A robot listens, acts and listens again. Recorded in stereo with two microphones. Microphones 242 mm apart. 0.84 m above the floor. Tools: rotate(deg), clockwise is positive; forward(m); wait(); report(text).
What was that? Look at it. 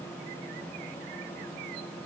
wait()
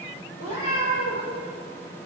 rotate(-90)
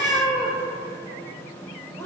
rotate(-10)
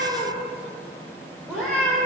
report("Found it: a cat meowing, straight ahead, 2 to 4 m away.")